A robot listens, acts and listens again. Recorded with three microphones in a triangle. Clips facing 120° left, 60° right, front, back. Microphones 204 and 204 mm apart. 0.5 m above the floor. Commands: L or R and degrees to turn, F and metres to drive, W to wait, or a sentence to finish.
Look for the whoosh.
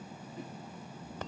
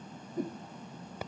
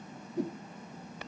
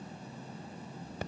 R10
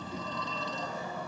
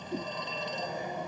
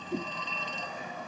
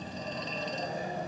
W
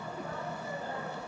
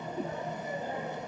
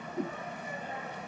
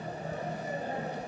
Found it: a whoosh, straight ahead.